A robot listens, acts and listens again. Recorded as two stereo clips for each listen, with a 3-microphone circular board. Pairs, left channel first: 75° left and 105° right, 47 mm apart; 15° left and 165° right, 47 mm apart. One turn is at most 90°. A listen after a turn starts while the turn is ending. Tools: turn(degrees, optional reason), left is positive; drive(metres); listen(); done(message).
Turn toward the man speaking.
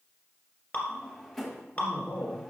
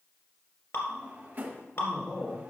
turn(degrees=-50, reason="The man speaking: 50° right.")
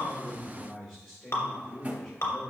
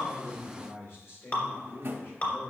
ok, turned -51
done("Facing the man speaking, over 4 m away.")